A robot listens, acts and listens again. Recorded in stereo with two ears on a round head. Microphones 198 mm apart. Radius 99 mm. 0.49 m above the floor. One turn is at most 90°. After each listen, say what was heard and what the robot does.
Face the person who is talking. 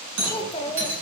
The child speaking: about 25° left or 155° left. Turn 25° left.
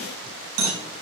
Keep listening.
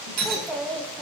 Facing the child speaking.